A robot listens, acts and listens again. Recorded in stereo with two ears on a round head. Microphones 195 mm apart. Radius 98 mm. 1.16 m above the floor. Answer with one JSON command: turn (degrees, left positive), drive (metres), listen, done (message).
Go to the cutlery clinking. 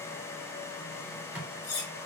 {"turn": 45}
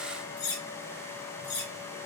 {"turn": 90}
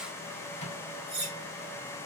{"turn": -30}
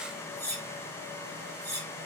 {"turn": 10}
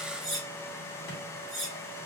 {"drive": 1.0}
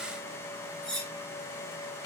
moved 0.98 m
{"drive": 1.0}
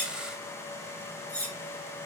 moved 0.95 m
{"drive": 1.0}
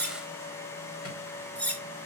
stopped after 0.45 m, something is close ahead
{"done": "Arrived at the cutlery clinking, straight ahead."}